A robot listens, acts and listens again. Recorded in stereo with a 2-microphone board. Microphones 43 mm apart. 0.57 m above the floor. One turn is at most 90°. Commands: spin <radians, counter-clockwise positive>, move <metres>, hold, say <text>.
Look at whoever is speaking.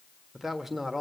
spin -0.52
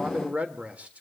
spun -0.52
spin -1.57
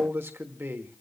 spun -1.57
spin -1.40
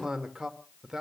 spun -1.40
spin -0.17
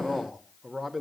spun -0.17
say Found it: a man speaking, straight ahead, 1 to 2 m away.